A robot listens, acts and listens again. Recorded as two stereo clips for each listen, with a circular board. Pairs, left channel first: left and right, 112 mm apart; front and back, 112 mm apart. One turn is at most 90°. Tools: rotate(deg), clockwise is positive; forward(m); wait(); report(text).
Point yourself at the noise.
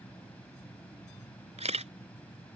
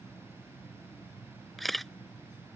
rotate(90)
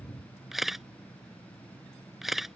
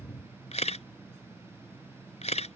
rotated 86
report("Facing the camera shutter.")